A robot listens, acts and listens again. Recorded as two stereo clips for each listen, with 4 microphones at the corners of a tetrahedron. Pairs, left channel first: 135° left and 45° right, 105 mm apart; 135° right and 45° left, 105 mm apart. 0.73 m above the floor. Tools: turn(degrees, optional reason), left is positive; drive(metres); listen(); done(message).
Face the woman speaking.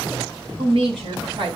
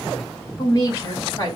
turn(degrees=-80, reason="The woman speaking: 80° right.")
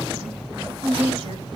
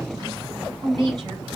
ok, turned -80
done("Found it: a woman speaking, straight ahead, over 4 m away.")